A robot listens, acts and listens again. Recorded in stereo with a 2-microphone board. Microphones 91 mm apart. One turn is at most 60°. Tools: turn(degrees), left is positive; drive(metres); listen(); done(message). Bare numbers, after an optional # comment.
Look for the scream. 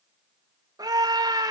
# The scream: about 40° right or 140° right.
turn(-40)
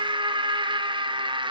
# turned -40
# So it is at 90° right.
turn(-60)
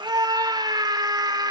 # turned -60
# The scream is now 60° right.
turn(-60)
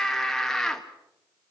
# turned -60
done("Facing the scream, 1 to 2 m away.")